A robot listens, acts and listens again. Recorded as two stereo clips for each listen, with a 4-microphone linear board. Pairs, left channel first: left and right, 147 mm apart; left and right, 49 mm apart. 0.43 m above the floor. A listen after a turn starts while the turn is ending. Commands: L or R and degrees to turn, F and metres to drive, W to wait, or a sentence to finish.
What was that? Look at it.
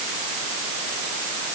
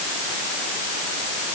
W
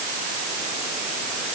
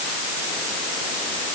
W
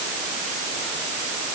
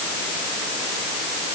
I can't make out anything.